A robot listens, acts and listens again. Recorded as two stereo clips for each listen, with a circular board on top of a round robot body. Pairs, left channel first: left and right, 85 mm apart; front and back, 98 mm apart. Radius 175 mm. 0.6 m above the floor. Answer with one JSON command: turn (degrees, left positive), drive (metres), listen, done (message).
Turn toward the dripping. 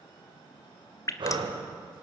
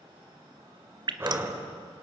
{"turn": 140}
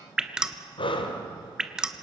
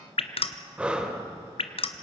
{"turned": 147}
{"turn": -10}
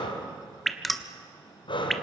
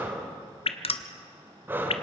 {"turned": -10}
{"done": "Facing the dripping."}